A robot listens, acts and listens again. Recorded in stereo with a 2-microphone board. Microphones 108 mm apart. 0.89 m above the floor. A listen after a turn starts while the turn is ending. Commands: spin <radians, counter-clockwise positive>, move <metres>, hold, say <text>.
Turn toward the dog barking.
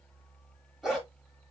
spin -0.52
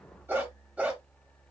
spin -0.52
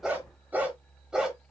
spin -0.52
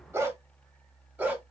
spin -0.52
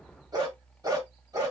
spin -2.62
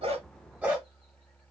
spin -0.26
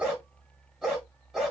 say Facing the dog barking.